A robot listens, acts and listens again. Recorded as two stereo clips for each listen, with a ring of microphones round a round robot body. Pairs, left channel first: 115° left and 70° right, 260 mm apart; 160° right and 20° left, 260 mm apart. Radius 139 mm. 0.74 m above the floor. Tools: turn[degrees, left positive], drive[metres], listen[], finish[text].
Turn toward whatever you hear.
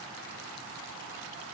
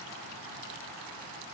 Action: listen[]
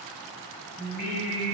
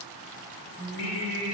Thought: The singing: 175° left.
Action: turn[175]
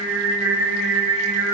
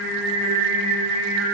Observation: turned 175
Thought: The singing is now 20° left.
Action: turn[20]
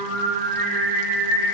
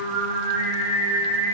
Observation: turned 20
Action: finish[Found it: singing, straight ahead.]